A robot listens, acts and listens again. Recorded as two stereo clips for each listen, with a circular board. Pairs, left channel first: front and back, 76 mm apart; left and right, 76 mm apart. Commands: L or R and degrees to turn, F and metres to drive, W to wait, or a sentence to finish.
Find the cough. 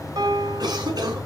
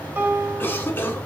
L150
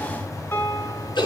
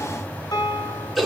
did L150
Facing the cough, over 4 m away.